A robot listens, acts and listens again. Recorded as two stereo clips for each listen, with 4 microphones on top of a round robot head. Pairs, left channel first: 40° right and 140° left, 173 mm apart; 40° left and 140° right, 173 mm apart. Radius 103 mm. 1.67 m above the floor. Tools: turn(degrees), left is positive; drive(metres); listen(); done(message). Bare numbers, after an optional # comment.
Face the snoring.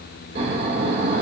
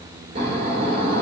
# The snoring: 170° left.
turn(170)
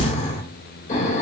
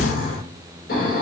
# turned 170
done("Found it: snoring, straight ahead.")